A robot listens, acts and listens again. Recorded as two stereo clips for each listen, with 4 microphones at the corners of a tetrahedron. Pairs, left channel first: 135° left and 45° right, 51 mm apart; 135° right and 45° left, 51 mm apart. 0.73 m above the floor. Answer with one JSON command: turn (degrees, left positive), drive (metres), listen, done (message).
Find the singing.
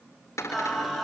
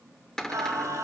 {"turn": 40}
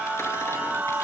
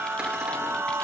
{"done": "Found it: singing, straight ahead."}